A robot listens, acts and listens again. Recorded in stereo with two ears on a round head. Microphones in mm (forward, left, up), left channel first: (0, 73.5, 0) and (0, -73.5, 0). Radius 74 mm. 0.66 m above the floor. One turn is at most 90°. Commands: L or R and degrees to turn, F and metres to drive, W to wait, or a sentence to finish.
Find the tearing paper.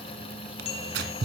R75
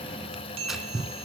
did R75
Found it: tearing paper, straight ahead, 2 to 4 m away.